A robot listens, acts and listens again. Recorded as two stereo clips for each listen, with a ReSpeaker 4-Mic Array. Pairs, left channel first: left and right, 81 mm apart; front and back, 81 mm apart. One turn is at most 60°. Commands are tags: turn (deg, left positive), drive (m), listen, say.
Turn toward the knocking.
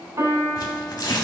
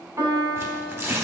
<listen/>
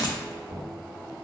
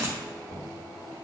<turn deg="-60"/>
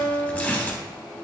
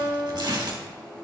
<listen/>
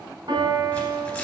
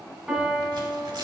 <listen/>
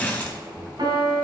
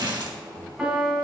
<turn deg="-25"/>
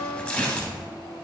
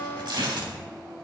<listen/>
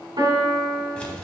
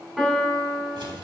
<turn deg="-20"/>
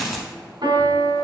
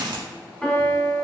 <listen/>
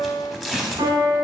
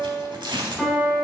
<listen/>
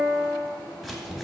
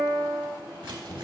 <say>Found it: knocking, straight ahead, 1 to 2 m away.</say>